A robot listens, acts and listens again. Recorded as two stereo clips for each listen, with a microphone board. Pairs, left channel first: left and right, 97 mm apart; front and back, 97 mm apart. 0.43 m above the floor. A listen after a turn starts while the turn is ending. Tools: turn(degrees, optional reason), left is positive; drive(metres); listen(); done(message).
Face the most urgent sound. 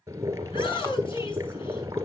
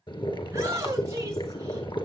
turn(degrees=120, reason="The shout: 120° left.")
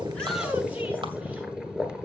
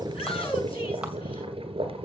listen()
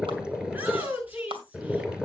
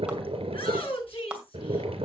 turn(degrees=-20, reason="The shout is now 20° right.")
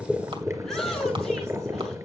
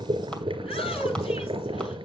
listen()
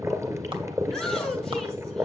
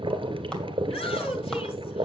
done("Facing the shout, over 4 m away.")